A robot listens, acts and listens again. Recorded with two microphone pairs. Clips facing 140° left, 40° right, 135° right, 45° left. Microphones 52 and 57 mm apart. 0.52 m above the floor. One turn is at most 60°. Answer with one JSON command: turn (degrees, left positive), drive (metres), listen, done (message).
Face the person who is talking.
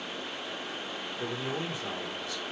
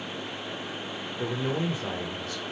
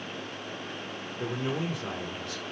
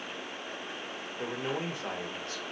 {"done": "Found it: a man speaking, straight ahead."}